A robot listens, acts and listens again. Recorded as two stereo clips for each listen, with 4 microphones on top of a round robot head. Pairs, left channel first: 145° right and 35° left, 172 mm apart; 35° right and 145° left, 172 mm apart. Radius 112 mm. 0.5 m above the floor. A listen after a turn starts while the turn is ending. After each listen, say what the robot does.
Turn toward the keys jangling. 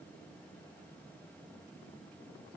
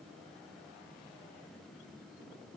Keep listening.
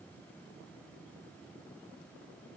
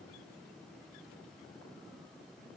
Keep listening.
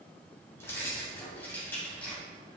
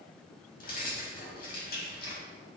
Turn 65° right.
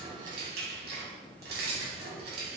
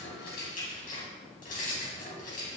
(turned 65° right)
Turn 10° left.
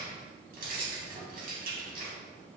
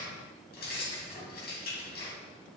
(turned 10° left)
Facing the keys jangling.